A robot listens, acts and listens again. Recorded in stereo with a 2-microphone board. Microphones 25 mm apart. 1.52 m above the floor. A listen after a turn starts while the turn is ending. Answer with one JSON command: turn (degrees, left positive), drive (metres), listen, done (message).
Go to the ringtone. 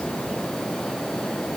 {"listen": true}
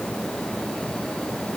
{"listen": true}
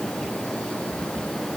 {"done": "I can't make out a ringtone."}